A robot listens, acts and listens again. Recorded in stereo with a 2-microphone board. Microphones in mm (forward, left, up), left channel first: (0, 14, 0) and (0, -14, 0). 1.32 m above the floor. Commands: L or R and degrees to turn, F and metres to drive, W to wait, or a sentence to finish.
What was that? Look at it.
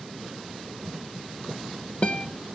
L35
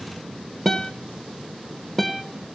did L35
Facing the guitar.